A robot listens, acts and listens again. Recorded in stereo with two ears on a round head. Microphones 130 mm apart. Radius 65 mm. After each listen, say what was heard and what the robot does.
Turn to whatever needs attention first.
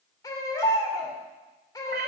The baby crying: about 25° left or 155° left. Turn 25° left.
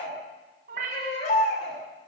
So it is at 130° left. Turn 130° left.
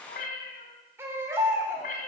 The baby crying is now 15° right. Turn 15° right.
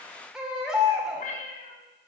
Facing the baby crying, 2 to 4 m away.